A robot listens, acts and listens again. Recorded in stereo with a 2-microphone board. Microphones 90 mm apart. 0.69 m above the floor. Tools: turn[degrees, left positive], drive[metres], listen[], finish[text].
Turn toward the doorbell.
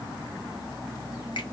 Action: listen[]
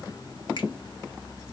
Action: listen[]
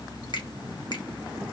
Action: finish[I can't make out a doorbell.]